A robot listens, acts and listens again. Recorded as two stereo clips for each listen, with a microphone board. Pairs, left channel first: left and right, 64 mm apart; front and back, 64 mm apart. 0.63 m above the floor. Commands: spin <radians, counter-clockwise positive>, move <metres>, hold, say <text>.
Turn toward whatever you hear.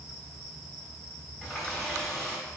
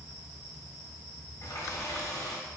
spin 0.17
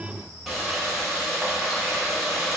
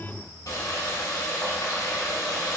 say Found it: a running tap, straight ahead.